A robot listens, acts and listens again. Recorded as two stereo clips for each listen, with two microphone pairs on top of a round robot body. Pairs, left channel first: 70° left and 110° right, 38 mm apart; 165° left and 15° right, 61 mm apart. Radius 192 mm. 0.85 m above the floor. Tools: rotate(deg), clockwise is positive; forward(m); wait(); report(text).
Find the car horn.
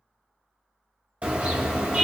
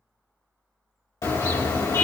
rotate(160)
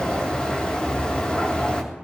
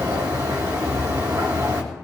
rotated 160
rotate(-10)
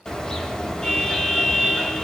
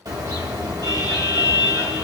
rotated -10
report("Facing the car horn, 2 to 4 m away.")